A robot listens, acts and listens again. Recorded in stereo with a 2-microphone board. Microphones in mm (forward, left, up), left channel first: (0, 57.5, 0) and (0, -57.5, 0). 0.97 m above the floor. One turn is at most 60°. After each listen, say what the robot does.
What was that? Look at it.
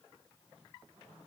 Keep listening.
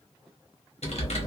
Turn 60° left.
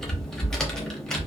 Found it: typing on a keyboard, straight ahead, under 1 m away.